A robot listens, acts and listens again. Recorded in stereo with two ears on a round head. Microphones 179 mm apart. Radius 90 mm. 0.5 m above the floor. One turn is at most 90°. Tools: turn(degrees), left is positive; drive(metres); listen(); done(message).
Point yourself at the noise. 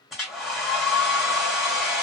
turn(degrees=30)
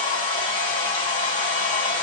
turn(degrees=90)
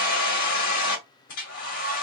turn(degrees=90)
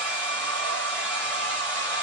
turn(degrees=10)
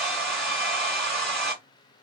done("Found it: a hair dryer, straight ahead, 1 to 2 m away.")